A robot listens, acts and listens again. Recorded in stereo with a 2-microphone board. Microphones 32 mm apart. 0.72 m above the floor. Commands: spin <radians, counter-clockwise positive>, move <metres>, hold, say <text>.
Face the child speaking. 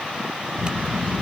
spin 0.87
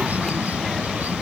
say Facing the child speaking.